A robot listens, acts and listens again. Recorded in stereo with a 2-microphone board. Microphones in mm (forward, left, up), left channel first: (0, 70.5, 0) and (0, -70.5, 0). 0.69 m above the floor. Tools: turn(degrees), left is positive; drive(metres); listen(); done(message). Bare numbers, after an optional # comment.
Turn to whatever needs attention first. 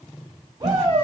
# The shout: about 35° right or 145° right.
turn(-35)
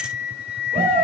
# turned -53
# So it is at 95° right.
turn(-95)
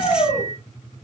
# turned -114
# The shout is now 20° left.
turn(20)
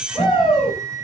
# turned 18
done("Found it: a shout, straight ahead.")